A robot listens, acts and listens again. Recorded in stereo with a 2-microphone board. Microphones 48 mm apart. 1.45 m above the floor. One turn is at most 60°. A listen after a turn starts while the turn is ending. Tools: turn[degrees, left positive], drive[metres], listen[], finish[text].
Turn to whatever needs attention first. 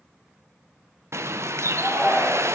Action: turn[30]
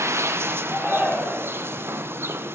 Thought: So it is at 20° right.
Action: turn[-20]
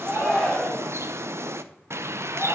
Action: finish[Facing the shout.]